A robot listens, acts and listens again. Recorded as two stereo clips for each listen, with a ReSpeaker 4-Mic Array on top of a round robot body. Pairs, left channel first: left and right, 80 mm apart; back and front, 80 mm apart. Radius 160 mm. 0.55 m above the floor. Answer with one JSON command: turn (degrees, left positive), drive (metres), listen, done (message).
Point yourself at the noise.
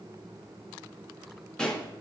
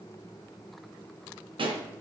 {"turn": 10}
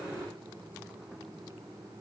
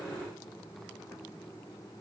{"done": "I heard a pop from this way, but can't make it out now."}